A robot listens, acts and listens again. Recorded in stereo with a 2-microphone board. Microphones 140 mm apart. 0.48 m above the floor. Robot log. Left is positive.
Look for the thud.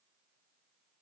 cmd idle
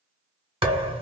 note: The thud: about 40° right or 140° right.
cmd yaw -40
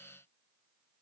cmd idle
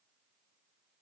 end: I heard a thud, but can't make it out now. It was about straight ahead or 100° right.